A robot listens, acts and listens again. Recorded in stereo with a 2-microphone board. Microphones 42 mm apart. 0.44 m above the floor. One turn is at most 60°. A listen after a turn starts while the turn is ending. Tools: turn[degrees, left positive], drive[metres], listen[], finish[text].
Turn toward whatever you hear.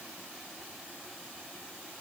Action: listen[]
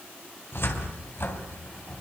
Thought: The cupboard door: about 70° left or 110° left.
Action: turn[60]
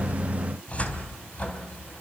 Thought: So it is at 35° left.
Action: turn[35]
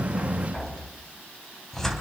Thought: The cupboard door is now 10° left.
Action: turn[10]
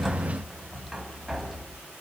Action: finish[Found it: a cupboard door, straight ahead.]